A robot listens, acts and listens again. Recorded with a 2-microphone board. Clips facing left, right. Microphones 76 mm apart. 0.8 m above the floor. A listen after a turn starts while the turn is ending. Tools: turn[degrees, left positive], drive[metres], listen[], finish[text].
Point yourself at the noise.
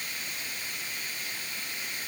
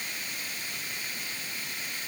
Action: listen[]
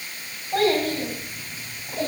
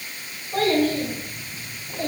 Thought: The child speaking: about 70° left or 110° left.
Action: turn[70]
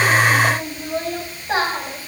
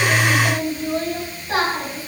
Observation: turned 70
Thought: So it is at 25° left.
Action: turn[25]
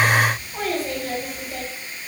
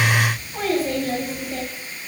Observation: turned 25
Action: finish[Found it: a child speaking, straight ahead.]